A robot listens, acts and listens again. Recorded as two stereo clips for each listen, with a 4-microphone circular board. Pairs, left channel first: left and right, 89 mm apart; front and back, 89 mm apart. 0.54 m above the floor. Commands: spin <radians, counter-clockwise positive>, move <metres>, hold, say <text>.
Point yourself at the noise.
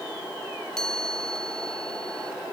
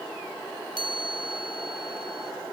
spin 2.97
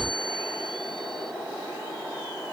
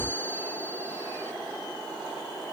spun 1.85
spin 1.13
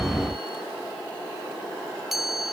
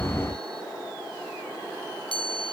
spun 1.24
say Found it: a chime, straight ahead.